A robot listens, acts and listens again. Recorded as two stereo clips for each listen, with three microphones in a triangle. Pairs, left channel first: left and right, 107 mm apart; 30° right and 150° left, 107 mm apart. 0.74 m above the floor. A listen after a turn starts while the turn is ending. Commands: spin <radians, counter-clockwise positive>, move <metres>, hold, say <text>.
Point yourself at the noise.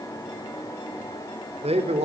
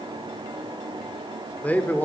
spin -1.83
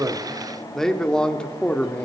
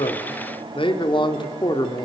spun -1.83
spin 0.26
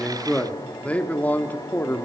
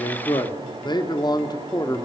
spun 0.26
spin 0.44
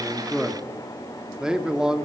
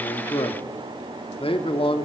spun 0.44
say Found it: a man speaking, straight ahead, 1 to 2 m away.